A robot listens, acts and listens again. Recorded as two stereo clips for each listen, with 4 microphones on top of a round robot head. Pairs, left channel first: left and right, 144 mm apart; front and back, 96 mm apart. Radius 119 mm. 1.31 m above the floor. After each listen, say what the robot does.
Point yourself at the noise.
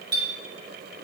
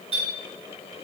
Turn 150° right.
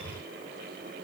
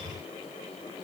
Keep listening.
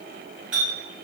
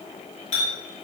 Facing the clink.